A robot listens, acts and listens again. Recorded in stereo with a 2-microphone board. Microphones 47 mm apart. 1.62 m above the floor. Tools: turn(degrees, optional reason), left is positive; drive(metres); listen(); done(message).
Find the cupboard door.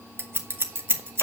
listen()
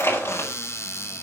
turn(degrees=65, reason="The cupboard door: about 65° left or 115° left.")
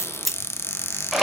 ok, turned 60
turn(degrees=55, reason="So it is at 55° left.")
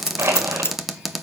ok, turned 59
done("Found it: a cupboard door, straight ahead, 1 to 2 m away.")